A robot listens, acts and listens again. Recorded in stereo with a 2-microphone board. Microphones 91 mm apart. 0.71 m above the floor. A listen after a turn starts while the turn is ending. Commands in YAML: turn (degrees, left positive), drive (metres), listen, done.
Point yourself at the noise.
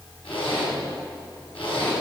turn: 90
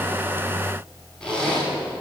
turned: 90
turn: 10
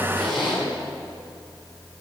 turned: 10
done: "Found it: a zipper, straight ahead, over 4 m away."